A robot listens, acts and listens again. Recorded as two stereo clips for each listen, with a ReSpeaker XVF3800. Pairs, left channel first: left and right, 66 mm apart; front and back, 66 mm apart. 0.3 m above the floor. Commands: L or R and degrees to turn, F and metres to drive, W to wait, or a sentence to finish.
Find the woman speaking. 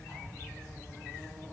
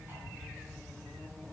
W
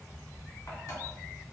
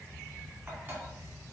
W
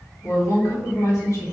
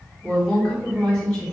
L80
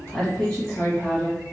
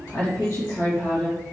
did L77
L20
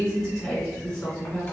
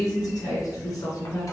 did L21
Facing the woman speaking.